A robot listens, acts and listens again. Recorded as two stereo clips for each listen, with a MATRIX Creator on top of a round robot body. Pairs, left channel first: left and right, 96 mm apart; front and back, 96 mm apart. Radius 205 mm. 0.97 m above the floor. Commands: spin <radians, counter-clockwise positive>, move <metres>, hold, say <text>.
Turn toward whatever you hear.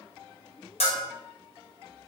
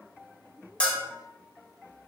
spin 1.40
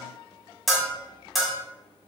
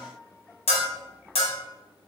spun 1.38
say Found it: a bell, straight ahead.